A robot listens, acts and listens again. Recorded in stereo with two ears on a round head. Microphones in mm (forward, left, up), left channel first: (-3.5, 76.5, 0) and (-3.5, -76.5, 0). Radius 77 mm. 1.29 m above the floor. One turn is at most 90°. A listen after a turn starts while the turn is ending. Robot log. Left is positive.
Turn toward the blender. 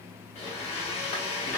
note: The blender: about 40° left or 140° left.
cmd yaw +40
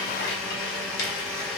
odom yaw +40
end: Found it: a blender, straight ahead.